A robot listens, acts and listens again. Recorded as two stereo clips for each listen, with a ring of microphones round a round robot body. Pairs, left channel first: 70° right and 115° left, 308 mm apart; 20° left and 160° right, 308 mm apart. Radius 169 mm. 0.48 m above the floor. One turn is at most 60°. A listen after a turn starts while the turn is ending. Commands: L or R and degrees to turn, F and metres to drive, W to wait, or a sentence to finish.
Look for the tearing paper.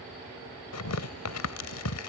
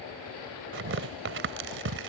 R60
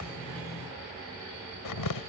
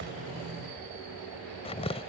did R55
R50
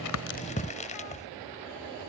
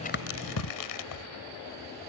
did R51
Facing the tearing paper.